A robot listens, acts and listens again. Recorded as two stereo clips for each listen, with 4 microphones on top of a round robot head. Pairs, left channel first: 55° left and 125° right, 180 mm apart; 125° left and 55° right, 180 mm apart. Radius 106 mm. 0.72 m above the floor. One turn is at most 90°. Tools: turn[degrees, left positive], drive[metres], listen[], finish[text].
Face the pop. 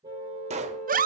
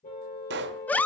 Thought: The pop: 75° right.
Action: turn[-75]
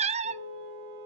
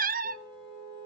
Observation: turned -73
Action: finish[I heard a pop from this way, but can't make it out now.]